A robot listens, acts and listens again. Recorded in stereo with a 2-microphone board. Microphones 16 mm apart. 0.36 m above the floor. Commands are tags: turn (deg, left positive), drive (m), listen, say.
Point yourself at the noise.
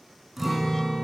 <turn deg="-30"/>
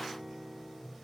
<turn deg="25"/>
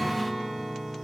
<say>Found it: a guitar, straight ahead, 1 to 2 m away.</say>